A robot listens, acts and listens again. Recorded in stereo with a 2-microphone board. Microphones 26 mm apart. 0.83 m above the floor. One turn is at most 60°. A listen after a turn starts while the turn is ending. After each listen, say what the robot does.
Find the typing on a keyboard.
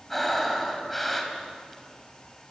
Keep listening.
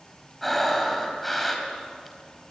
Keep listening.
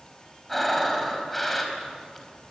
I can't make out typing on a keyboard, only breathing.